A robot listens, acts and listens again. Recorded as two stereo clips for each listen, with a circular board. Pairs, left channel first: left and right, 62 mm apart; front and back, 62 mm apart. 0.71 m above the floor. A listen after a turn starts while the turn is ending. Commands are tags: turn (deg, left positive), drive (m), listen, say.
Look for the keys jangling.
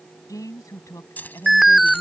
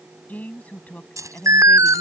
<turn deg="150"/>
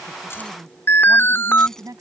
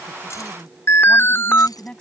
<listen/>
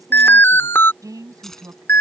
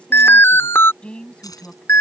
<say>Facing the keys jangling.</say>